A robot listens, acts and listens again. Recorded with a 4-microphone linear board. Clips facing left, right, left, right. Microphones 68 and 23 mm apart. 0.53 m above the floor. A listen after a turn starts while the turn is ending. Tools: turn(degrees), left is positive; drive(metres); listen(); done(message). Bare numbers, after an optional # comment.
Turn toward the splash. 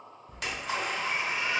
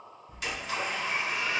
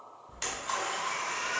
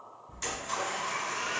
# The splash: about 60° left or 120° left.
turn(60)
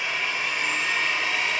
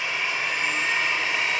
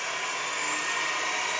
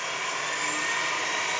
listen()
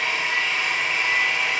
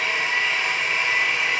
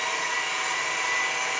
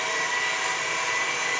done("I heard a splash, but can't make it out now. It was about straight ahead or 60° left.")